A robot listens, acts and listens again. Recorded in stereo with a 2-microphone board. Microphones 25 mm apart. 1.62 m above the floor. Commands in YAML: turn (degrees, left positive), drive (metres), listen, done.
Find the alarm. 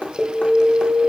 turn: 55
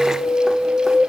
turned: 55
turn: 65
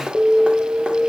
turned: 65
turn: 25
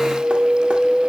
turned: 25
turn: 15
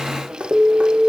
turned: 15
done: "Facing the alarm, 1 to 2 m away."